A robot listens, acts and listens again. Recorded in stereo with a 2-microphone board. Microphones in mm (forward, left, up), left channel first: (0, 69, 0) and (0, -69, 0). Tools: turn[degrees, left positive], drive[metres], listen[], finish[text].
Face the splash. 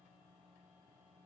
Action: listen[]
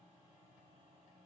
Action: listen[]
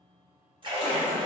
Thought: The splash: about 35° right or 145° right.
Action: turn[-35]
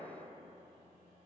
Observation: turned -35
Action: listen[]
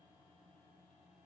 Action: finish[I heard a splash, but can't make it out now. It was about straight ahead or 110° right.]